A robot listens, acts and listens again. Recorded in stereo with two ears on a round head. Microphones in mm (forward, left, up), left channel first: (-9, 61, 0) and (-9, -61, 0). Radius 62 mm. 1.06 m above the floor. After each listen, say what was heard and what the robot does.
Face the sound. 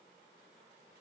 Keep listening.
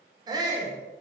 The shout: about 30° right or 150° right. Turn 30° right.
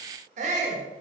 So it is at 120° right. Turn 120° right.
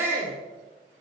The shout is now 15° right. Turn 15° right.
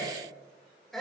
Found it: a shout, straight ahead.